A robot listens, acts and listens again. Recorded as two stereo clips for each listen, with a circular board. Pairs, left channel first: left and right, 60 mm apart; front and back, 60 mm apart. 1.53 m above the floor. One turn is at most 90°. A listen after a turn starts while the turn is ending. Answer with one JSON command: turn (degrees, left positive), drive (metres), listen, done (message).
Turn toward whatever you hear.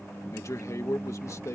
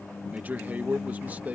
{"turn": 90}
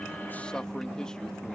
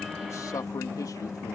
{"turn": 10}
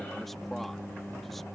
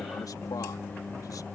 {"listen": true}
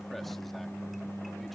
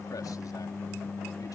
{"listen": true}
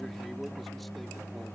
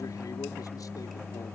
{"done": "Facing where the man speaking came from. I can't hear it now."}